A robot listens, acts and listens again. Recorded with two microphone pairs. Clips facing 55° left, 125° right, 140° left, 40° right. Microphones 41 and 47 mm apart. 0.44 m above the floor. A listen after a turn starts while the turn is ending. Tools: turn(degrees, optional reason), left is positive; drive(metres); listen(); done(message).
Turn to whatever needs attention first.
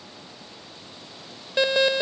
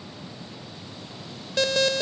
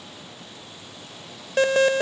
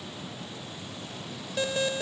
turn(degrees=120, reason="The alarm: 120° left.")
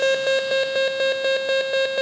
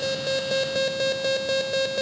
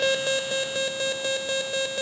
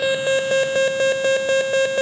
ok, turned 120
done("Facing the alarm.")